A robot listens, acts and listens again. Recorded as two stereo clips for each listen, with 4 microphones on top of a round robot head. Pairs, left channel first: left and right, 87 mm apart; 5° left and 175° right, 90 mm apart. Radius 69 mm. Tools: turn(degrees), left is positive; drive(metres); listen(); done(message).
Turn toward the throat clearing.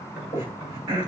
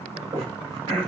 turn(degrees=-145)
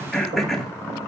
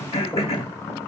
done("Found it: throat clearing, straight ahead, 2 to 4 m away.")